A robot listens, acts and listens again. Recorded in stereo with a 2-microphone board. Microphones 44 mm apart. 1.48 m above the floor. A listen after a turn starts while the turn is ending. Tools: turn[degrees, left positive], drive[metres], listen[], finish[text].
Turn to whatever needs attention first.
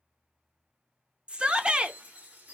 Thought: The shout: about 20° right or 160° right.
Action: turn[-20]
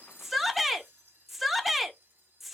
Action: finish[Found it: a shout, straight ahead.]